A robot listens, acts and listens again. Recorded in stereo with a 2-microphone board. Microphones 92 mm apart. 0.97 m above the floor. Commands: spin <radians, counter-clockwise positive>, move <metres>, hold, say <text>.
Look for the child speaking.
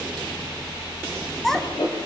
spin 0.52
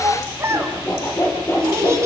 spin -0.52
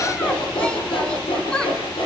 spin 0.17
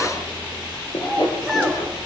say Found it: a child speaking, straight ahead, over 4 m away.